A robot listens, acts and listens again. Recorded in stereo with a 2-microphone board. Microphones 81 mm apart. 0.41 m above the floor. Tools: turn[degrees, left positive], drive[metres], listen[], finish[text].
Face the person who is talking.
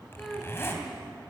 Action: turn[30]
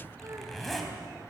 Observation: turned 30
Action: listen[]
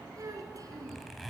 Thought: So it is at 50° right.
Action: turn[-50]
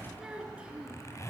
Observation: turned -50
Thought: The child speaking is now 15° right.
Action: turn[-15]
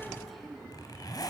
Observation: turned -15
Action: finish[Facing the child speaking.]